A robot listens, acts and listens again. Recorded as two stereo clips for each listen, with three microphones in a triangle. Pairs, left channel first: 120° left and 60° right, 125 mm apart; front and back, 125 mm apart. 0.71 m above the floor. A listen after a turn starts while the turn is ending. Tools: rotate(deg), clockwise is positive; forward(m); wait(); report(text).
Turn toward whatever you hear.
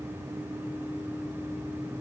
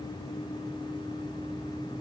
wait()
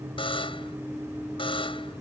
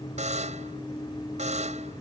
rotate(-165)
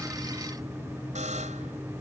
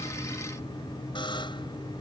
rotate(50)
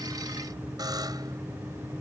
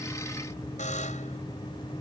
report("Facing the buzzer.")